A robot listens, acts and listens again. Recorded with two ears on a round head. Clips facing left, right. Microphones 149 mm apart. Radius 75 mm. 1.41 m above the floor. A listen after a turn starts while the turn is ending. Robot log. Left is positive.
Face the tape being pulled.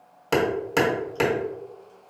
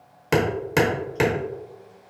cmd idle
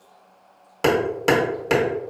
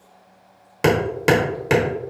cmd idle
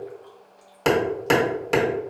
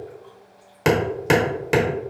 end: I can't make out tape being pulled to turn to.